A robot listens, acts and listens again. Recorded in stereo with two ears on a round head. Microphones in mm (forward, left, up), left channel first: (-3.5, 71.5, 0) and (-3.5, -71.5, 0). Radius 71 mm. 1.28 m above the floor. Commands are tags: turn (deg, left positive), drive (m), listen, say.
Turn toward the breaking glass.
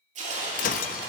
<turn deg="50"/>
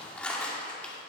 <listen/>
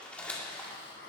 <say>I heard breaking glass, but can't make it out now. It was about straight ahead or 80° left.</say>